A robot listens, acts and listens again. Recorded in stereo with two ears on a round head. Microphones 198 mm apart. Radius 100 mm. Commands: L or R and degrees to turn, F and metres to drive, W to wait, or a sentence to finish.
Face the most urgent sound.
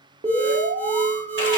R30
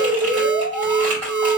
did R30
R115
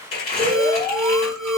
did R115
Facing the alarm, 1 to 2 m away.